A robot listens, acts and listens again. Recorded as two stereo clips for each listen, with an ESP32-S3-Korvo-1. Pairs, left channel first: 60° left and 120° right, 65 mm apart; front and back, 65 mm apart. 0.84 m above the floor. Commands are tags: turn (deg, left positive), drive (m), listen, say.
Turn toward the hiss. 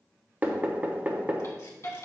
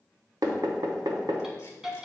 <turn deg="100"/>
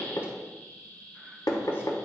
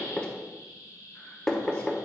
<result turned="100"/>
<say>Facing the hiss.</say>